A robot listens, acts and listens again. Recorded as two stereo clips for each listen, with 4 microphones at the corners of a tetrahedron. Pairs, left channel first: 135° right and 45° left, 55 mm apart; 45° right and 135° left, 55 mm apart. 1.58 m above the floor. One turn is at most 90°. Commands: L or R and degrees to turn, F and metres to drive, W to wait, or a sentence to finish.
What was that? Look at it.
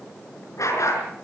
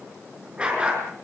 R90
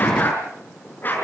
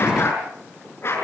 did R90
R85
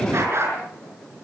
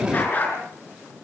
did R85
L10
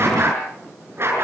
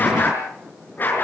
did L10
Facing the dog barking.